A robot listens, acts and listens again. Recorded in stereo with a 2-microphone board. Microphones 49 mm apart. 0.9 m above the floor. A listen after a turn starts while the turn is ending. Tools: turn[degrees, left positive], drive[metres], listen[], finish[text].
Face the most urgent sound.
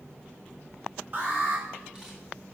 Thought: The alarm: about 45° right or 135° right.
Action: turn[-45]
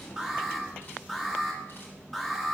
Action: finish[Facing the alarm.]